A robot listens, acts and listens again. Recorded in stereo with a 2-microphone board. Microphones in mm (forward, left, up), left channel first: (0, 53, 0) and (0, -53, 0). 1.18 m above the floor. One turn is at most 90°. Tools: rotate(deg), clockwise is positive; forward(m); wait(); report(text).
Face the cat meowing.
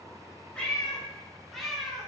rotate(30)
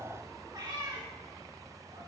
rotate(90)
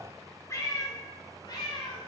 rotate(-45)
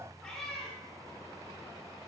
rotate(-10)
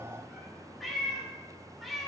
report("Facing the cat meowing, 1 to 2 m away.")